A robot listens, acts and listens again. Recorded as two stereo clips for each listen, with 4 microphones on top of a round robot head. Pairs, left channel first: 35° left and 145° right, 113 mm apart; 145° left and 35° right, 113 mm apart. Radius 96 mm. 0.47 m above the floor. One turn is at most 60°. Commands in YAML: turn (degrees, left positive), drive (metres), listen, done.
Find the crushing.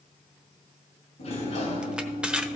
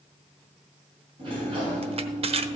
turn: -60
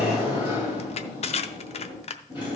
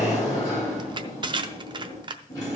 turn: 10
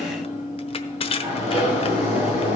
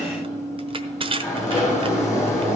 done: "Facing the crushing."